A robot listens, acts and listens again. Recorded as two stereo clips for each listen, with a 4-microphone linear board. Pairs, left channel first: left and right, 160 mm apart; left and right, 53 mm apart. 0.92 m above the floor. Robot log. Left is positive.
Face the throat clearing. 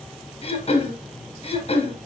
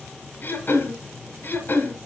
note: The throat clearing: about 40° left or 140° left.
cmd yaw +40
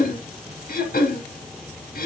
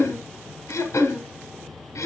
note: So it is at 95° left.
cmd yaw +95
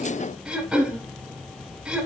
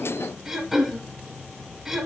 note: The throat clearing is now 10° right.
cmd yaw -10
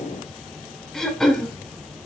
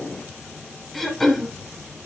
end: Facing the throat clearing.